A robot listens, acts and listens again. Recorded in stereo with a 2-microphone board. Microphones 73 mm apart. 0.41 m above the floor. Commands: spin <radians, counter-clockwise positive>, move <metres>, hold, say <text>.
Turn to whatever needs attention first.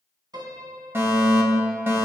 spin -0.52
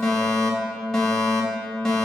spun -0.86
spin 0.17
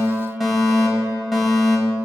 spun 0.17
say Found it: a fire alarm, straight ahead.